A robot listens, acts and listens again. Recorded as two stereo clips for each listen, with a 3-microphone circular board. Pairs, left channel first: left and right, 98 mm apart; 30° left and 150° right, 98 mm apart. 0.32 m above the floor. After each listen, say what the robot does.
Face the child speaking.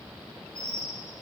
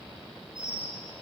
Keep listening.
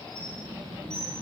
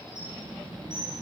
Turn 120° right.
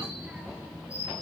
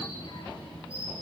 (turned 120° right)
Turn 10° right.
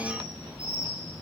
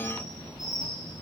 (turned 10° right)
Facing the child speaking, 2 to 4 m away.